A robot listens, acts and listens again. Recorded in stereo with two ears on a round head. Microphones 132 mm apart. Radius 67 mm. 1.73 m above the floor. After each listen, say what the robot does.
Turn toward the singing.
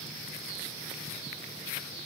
Keep listening.
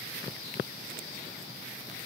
Keep listening.
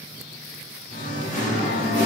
Turn 55° left.
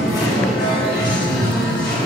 Turn 70° left.
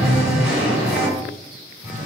Found it: singing, straight ahead, 2 to 4 m away.